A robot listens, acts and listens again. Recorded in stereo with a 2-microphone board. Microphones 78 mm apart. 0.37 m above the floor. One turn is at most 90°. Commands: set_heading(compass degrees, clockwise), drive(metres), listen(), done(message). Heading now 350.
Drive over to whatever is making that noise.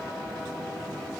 listen()
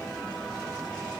listen()
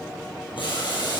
set_heading(260)
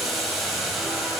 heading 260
drive(1.0)
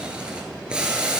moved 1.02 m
set_heading(275)
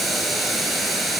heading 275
drive(1.0)
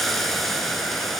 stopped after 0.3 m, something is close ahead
done("I am next to the boiling.")